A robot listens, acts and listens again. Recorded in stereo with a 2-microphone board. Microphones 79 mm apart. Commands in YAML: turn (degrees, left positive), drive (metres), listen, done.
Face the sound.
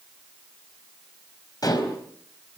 turn: 55
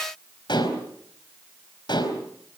turn: 70
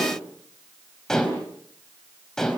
done: "Facing the dishes clattering, over 4 m away."